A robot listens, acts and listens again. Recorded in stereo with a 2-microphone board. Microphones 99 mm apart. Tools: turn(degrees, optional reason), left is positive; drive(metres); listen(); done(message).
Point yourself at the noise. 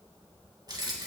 turn(degrees=-45, reason="The keys jangling: about 45° right or 135° right.")
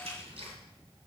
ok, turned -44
turn(degrees=-100, reason="So it is at 100° right.")
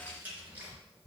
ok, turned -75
turn(degrees=-15, reason="The keys jangling is now 15° right.")
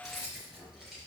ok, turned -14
done("Found it: keys jangling, straight ahead.")